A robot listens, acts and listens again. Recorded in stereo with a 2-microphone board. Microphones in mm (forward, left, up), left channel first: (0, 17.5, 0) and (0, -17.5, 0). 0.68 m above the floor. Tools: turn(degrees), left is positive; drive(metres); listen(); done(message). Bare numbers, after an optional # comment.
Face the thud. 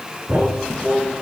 turn(-90)
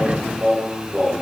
done("I heard a thud from this way, but can't make it out now.")